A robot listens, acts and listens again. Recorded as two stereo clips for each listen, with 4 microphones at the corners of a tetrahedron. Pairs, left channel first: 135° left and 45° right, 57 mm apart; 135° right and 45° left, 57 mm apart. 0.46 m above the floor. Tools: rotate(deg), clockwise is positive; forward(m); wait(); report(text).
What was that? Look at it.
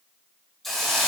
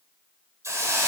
rotate(-50)
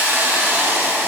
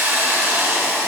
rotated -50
report("Found it: a hiss, straight ahead, 2 to 4 m away.")